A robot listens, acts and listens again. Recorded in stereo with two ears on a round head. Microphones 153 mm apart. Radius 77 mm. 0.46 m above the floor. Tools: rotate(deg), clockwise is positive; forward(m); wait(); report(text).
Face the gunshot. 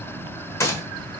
rotate(-20)
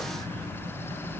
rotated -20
wait()
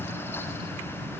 report("I heard a gunshot, but can't make it out now. It was about straight ahead or 140° left.")